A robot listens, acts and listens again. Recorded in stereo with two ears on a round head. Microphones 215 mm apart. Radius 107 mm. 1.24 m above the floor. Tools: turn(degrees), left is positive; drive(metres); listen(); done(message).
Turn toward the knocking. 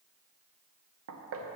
turn(degrees=-60)
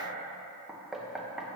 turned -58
done("Facing the knocking, under 1 m away.")